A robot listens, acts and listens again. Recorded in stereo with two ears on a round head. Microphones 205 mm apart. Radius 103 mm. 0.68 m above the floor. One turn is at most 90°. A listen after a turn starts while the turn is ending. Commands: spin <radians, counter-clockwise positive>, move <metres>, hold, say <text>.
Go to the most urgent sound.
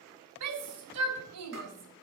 spin -1.57
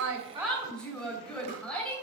move 1.0
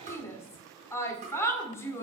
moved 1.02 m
spin 0.17
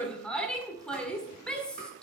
move 1.0
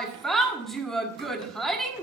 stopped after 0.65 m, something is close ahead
say Arrived at the shout, straight ahead.